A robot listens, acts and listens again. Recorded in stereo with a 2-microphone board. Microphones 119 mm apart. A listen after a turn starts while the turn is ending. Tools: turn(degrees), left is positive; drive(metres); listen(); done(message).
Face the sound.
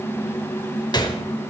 turn(degrees=35)
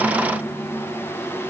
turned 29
listen()
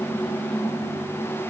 done("I heard a gunshot, but can't make it out now. It was about 5° left or 115° left.")